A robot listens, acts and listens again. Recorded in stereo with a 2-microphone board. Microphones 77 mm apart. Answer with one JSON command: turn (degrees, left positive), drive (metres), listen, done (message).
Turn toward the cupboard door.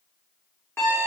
{"listen": true}
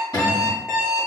{"turn": 65}
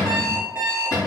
{"turn": 45}
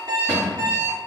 {"turn": -20}
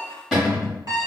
{"done": "Found it: a cupboard door, straight ahead."}